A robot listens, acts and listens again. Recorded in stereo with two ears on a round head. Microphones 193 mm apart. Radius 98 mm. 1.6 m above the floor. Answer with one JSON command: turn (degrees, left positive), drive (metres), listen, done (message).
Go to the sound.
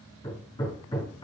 {"turn": 20}
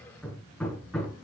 {"drive": 1.0}
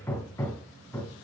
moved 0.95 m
{"turn": 15}
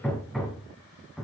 {"drive": 1.0}
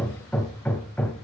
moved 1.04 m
{"turn": 10}
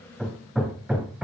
{"drive": 1.0}
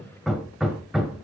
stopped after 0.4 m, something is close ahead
{"done": "I am next to the hammering."}